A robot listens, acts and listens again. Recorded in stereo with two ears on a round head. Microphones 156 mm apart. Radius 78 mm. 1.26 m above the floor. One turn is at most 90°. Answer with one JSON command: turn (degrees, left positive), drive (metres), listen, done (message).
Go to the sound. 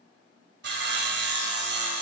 {"turn": -70}
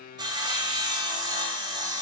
{"turn": -25}
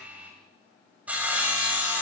{"turn": -10}
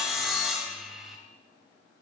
{"drive": 1.0}
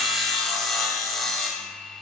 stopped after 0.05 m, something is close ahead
{"done": "Something is in my way. I am facing the sawing but have not reached it."}